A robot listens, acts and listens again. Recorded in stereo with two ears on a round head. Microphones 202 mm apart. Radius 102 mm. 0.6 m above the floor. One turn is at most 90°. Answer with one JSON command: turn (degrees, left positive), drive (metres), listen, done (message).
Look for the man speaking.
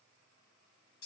{"listen": true}
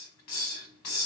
{"listen": true}
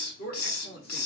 {"turn": 45}
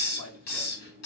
{"listen": true}
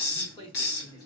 {"turn": 15}
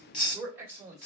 {"turn": -15}
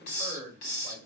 {"done": "Facing the man speaking, 1 to 2 m away."}